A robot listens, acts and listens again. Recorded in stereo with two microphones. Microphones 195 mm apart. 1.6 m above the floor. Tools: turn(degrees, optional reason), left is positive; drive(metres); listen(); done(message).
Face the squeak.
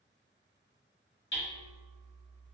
listen()
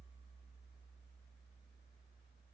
listen()
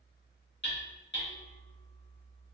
done("I can't make out a squeak to turn to.")